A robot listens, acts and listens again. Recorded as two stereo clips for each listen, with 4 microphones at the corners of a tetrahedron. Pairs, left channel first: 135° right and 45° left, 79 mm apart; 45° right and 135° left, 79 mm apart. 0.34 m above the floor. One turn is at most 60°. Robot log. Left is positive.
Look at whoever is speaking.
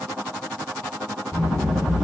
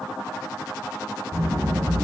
note: The child speaking: 175° right.
cmd yaw -60
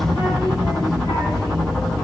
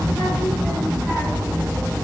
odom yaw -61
note: The child speaking is now 115° right.
cmd yaw -60
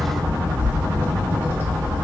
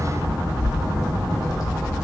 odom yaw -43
note: The child speaking is now 75° right.
cmd yaw -60
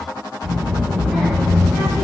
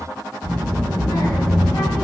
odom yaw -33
note: The child speaking is now 40° right.
cmd yaw -40
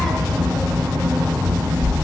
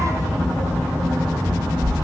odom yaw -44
end: Facing the child speaking, 1 to 2 m away.